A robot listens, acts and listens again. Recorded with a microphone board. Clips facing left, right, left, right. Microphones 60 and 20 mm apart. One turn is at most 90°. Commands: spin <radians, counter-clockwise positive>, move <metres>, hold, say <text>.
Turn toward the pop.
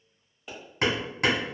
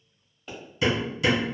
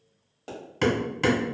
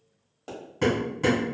spin 0.52
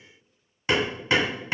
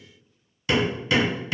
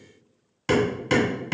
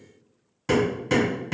hold
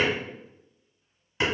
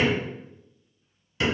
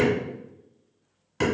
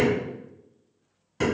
say I heard a pop, but can't make it out now. It was about 25° right or 145° left.